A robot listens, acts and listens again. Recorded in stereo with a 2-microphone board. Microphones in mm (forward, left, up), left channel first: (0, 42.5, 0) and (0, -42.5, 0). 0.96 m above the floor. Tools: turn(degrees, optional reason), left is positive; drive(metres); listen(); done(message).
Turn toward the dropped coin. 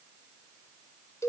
listen()
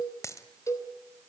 turn(degrees=40, reason="The dropped coin: about 40° left or 140° left.")
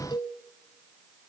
listen()
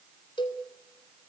done("I heard a dropped coin, but can't make it out now. It was about straight ahead or 100° left.")